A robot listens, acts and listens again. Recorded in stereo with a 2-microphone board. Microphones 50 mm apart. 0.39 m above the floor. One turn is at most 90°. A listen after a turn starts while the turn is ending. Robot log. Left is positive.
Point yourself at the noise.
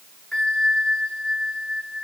cmd yaw +30
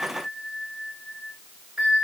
note: So it is at 20° right.
cmd yaw -20
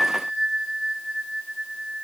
end: Found it: a bell, straight ahead, 1 to 2 m away.